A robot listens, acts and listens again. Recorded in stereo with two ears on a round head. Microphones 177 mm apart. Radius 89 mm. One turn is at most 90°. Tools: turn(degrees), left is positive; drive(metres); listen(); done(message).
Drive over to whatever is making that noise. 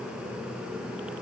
listen()
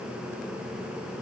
listen()
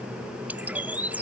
turn(degrees=-30)
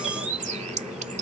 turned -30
turn(degrees=-90)
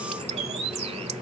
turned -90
turn(degrees=-30)
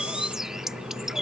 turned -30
drive(metres=1.0)
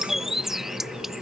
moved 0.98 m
drive(metres=1.0)
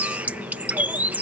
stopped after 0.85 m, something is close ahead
turn(degrees=-10)
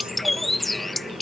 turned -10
done("I am next to the bird.")